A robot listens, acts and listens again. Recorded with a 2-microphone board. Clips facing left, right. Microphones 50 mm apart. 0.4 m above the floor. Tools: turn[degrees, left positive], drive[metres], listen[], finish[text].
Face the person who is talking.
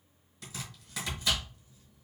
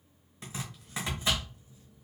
Action: listen[]
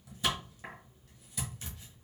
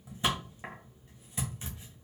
Action: listen[]
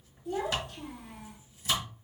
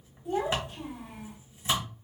Thought: The child speaking: about 25° right or 155° right.
Action: turn[-25]
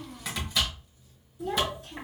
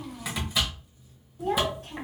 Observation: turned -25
Thought: So it is at 125° right.
Action: turn[-125]
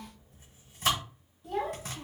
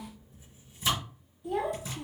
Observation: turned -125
Action: finish[Facing the child speaking, 1 to 2 m away.]